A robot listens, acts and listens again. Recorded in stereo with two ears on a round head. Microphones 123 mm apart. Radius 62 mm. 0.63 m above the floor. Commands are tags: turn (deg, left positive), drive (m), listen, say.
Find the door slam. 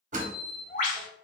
<turn deg="-55"/>
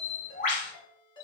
<listen/>
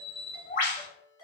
<say>I heard a door slam, but can't make it out now. It was about straight ahead or 70° right.</say>